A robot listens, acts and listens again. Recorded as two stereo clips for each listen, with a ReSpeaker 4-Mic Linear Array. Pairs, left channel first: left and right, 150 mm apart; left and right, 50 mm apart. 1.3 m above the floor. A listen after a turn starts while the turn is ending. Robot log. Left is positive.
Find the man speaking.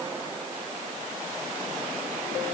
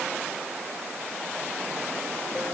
cmd idle
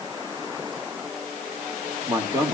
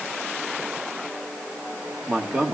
note: The man speaking: about 20° right or 160° right.
cmd yaw -20
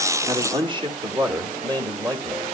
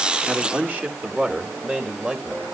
note: The man speaking: about 25° right or 155° right.
cmd yaw -25
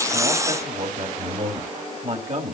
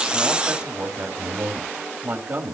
note: So it is at 130° right.
cmd yaw -130
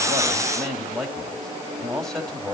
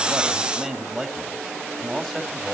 end: Found it: a man speaking, straight ahead.